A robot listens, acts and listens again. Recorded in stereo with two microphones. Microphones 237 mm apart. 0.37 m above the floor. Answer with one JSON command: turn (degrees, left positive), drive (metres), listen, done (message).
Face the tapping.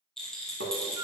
{"turn": -90}
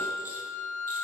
{"listen": true}
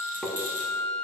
{"done": "Found it: tapping, straight ahead."}